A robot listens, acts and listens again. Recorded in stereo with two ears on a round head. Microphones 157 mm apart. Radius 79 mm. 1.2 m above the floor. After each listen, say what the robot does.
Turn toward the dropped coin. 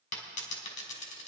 Turn 45° left.
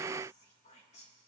Keep listening.
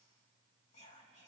I heard a dropped coin, but can't make it out now. It was about straight ahead or 90° left.